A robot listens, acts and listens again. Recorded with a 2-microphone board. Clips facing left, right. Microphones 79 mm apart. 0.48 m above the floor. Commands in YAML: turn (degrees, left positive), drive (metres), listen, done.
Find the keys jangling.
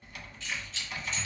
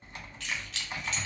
turn: -70
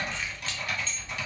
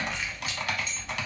listen: true
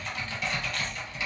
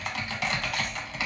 listen: true
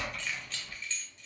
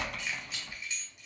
turn: -15
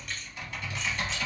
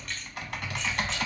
listen: true
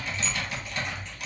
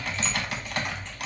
listen: true
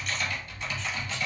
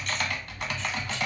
done: "Facing where the keys jangling came from. I can't hear it now."